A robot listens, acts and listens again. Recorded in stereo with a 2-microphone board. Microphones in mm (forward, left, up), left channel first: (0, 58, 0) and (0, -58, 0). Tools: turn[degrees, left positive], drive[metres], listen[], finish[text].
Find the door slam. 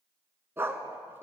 Action: listen[]
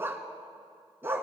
Action: listen[]
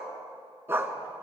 Action: finish[I can't make out a door slam to turn to.]